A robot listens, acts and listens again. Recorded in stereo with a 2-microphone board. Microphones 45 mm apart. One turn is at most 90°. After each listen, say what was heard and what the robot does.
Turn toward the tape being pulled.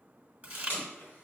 The tape being pulled: about 45° left or 135° left. Turn 45° left.
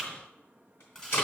So it is at 85° left. Turn 85° left.
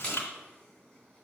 The tape being pulled is now 20° left. Turn 20° left.
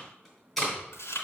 Found it: tape being pulled, straight ahead.